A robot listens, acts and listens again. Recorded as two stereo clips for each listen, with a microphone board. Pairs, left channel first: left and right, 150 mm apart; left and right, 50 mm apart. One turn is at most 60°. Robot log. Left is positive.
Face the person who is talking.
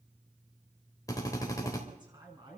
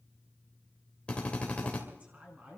note: The man speaking: about 30° right or 150° right.
cmd yaw -30
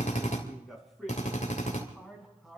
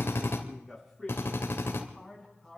end: Facing the man speaking, over 4 m away.